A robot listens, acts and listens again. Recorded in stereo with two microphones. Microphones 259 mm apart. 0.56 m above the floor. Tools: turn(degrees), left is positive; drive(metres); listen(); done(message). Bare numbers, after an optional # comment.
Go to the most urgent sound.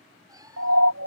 # The siren: about 70° right or 110° right.
turn(-70)
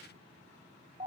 # So it is at 25° right.
turn(-25)
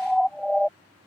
drive(1.0)
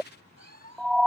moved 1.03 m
drive(1.0)
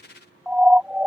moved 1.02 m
drive(1.0)
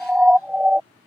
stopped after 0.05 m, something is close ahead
done("I am next to the siren.")